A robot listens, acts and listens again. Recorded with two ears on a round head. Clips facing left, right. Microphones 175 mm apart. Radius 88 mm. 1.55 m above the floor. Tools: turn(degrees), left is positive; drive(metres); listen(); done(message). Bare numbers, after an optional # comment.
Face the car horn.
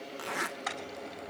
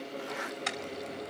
# The car horn: about 30° right or 150° right.
turn(-30)
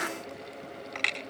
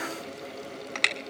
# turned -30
# So it is at 120° right.
turn(-120)
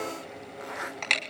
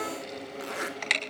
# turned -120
done("Found it: a car horn, straight ahead, over 4 m away.")